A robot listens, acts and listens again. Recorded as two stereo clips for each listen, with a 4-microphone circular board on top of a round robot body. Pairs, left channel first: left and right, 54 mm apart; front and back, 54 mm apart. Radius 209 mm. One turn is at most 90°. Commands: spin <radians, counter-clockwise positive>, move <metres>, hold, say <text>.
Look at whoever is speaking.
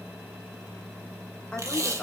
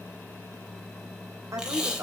spin 1.57
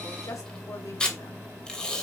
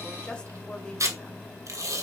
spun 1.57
spin 1.22
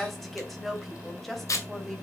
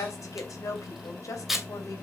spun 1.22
say Found it: a woman speaking, straight ahead, 2 to 4 m away.